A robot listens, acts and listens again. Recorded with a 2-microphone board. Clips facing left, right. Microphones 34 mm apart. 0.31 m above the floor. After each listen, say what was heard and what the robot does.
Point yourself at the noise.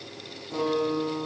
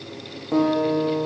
The guitar: about 50° right or 130° right. Turn 50° right.
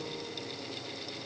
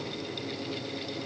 Keep listening.
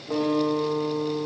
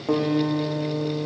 So it is at 80° right. Turn 80° right.
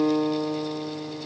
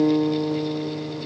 The guitar is now 20° left. Turn 20° left.
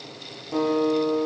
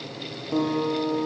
Found it: a guitar, straight ahead.